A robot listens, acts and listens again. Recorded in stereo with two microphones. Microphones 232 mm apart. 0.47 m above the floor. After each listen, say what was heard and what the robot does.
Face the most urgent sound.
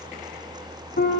Keep listening.
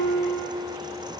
Keep listening.
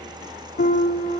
I can't make out anything urgent to turn to.